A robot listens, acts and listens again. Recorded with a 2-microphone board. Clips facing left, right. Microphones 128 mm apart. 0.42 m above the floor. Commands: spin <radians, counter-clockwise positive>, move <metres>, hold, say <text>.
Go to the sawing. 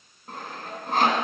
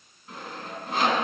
spin 0.96
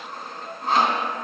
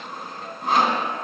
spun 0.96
move 1.0
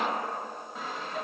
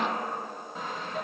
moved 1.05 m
move 1.0
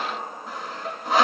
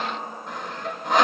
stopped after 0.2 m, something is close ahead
say Arrived at the sawing, straight ahead.